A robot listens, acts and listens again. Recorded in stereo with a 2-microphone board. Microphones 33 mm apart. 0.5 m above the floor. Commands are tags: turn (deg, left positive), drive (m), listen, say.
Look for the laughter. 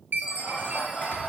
<turn deg="30"/>
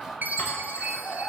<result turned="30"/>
<turn deg="140"/>
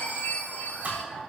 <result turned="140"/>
<turn deg="-10"/>
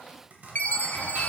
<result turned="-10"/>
<listen/>
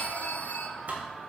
<say>Found it: laughter, straight ahead, 2 to 4 m away.</say>